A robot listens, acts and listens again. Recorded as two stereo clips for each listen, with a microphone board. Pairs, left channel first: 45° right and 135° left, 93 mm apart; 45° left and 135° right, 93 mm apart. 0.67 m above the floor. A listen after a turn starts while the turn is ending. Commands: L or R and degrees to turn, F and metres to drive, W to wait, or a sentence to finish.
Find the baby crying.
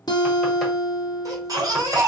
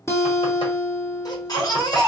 L85
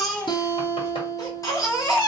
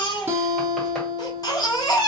Found it: a baby crying, straight ahead.